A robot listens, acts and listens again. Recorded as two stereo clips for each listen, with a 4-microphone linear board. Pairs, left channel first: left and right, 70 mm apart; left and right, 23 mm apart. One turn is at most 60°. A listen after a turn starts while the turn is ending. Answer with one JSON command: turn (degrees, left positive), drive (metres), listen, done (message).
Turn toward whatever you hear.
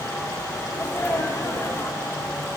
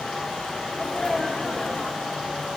{"turn": 40}
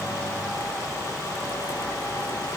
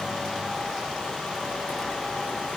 {"listen": true}
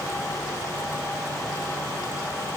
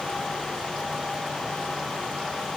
{"done": "I heard a sneeze, but can't make it out now. It was about straight ahead or 100° left."}